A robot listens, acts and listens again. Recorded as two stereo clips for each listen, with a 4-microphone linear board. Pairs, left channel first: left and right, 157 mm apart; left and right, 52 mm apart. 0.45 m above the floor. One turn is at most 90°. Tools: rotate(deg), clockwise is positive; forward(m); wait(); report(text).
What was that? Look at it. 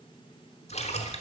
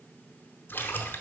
rotate(-40)
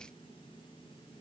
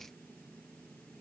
wait()
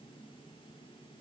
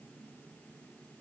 report("I heard a splash, but can't make it out now. It was about straight ahead or 100° left.")